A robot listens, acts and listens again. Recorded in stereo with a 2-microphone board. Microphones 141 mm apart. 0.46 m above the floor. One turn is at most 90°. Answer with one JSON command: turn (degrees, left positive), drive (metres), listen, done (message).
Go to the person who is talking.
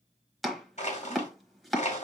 {"listen": true}
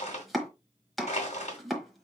{"listen": true}
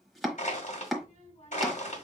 {"turn": 55}
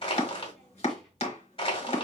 {"drive": 1.0}
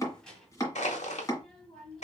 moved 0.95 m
{"drive": 1.0}
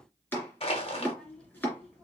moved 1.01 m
{"drive": 1.0}
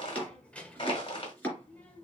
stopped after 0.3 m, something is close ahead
{"turn": 10}
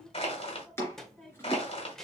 {"done": "I am next to the child speaking."}